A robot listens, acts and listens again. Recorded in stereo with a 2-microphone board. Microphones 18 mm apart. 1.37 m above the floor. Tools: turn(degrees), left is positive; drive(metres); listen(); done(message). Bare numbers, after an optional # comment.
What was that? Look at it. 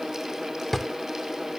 turn(30)
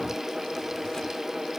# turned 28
listen()
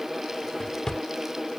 # So it is at 135° left.
turn(135)
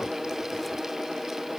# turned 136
listen()
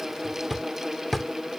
done("Facing the drawer.")